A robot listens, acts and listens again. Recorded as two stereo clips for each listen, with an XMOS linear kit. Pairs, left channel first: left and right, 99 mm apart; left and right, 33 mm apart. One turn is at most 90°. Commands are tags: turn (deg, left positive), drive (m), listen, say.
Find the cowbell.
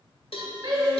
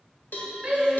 <turn deg="75"/>
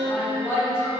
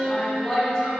<listen/>
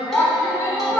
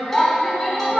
<listen/>
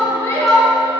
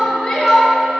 <say>I heard a cowbell, but can't make it out now. It was about straight ahead or 30° left.</say>